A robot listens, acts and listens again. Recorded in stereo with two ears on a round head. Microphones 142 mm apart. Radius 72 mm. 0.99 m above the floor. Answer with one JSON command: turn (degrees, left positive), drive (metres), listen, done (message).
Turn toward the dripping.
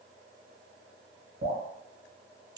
{"turn": -60}
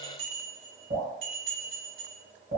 {"turn": -55}
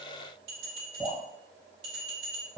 {"done": "Facing the dripping, 1 to 2 m away."}